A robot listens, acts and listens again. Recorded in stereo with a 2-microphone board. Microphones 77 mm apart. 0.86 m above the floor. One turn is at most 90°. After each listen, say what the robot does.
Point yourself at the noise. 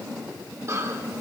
Turn 40° right.
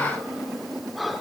Found it: breathing, straight ahead, under 1 m away.